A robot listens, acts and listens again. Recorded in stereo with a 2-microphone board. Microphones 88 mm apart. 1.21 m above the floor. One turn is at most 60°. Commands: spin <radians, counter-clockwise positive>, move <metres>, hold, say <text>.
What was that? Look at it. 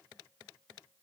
hold
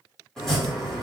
spin 0.52
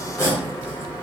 spin 1.05
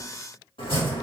spin 1.05
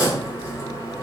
spin 0.61
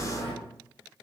spin 0.17
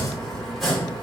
say Facing the chopping.